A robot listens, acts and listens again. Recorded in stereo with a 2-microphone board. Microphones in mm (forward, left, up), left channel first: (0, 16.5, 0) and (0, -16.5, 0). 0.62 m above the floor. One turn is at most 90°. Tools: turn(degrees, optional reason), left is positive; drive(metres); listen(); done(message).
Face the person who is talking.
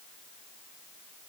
listen()
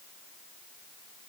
listen()
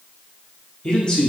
turn(degrees=25, reason="The man speaking: about 25° left or 155° left.")
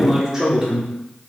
turn(degrees=-20, reason="So it is at 20° right.")
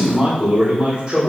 turn(degrees=-30, reason="The man speaking is now 30° right.")
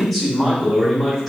turn(degrees=10, reason="The man speaking is now 10° left.")
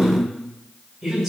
done("Found it: a man speaking, straight ahead, 1 to 2 m away.")